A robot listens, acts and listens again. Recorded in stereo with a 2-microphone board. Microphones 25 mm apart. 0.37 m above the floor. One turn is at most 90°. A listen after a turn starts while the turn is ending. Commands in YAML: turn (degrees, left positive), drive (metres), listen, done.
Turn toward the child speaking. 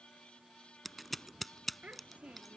turn: -55
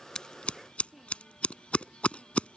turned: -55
done: "Facing the child speaking."